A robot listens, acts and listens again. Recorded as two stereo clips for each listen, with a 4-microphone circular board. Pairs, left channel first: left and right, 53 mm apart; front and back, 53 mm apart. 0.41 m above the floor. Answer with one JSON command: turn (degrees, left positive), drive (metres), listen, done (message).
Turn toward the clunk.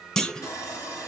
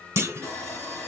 {"turn": 165}
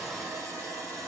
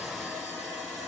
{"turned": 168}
{"done": "I heard a clunk from this way, but can't make it out now."}